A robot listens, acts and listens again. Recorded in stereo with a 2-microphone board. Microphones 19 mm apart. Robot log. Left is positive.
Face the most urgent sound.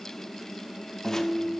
cmd idle
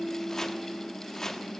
cmd idle
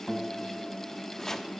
end: I can't make out anything urgent, only chopping and a guitar.